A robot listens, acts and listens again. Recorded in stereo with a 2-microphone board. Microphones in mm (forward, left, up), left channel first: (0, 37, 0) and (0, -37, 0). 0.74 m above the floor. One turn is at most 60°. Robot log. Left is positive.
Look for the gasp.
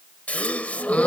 note: The gasp: about 20° left or 160° left.
cmd yaw +20
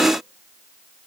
cmd idle
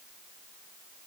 end: I heard a gasp, but can't make it out now. It was about straight ahead or 140° left.